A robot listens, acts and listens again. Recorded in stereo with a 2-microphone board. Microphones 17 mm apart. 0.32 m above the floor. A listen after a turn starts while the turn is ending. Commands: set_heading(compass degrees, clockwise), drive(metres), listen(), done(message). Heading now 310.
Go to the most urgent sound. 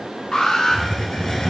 set_heading(250)
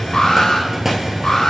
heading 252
set_heading(197)
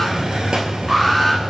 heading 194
drive(1.0)
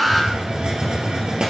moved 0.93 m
drive(1.0)
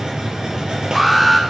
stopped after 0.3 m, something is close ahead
set_heading(204)
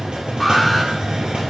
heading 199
listen()
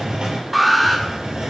done("Arrived at the alarm, straight ahead.")